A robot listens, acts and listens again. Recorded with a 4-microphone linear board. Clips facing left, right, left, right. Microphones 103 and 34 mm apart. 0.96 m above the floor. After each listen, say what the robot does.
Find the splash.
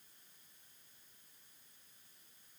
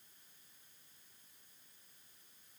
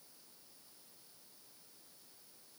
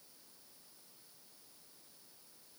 Keep listening.
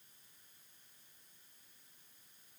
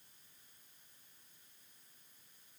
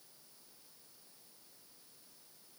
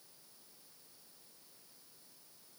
Keep listening.
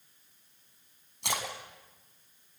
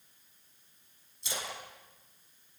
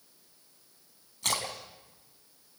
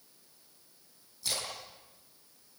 Turn 70° left.
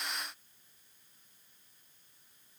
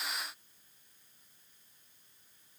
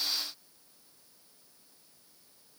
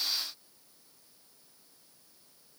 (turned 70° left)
Keep listening.
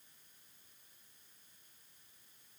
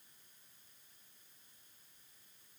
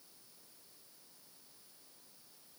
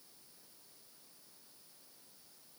I heard a splash, but can't make it out now. It was about straight ahead or 40° left.